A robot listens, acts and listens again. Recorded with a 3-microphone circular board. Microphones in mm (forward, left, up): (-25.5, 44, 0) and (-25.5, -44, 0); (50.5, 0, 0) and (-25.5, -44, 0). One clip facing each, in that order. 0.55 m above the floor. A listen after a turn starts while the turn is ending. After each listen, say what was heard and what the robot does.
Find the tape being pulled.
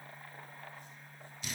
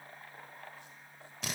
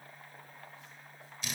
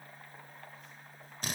Keep listening.
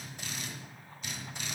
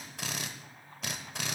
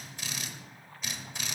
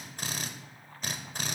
Keep listening.
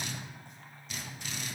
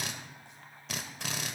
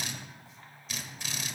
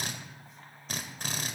I can't make out tape being pulled to turn to.